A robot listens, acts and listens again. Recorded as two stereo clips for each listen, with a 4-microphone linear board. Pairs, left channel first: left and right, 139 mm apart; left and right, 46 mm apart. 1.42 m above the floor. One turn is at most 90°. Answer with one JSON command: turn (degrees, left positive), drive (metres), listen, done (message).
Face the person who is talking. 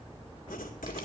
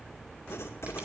{"listen": true}
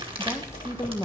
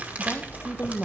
{"turn": 20}
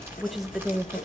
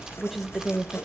{"done": "Facing the woman speaking, 1 to 2 m away."}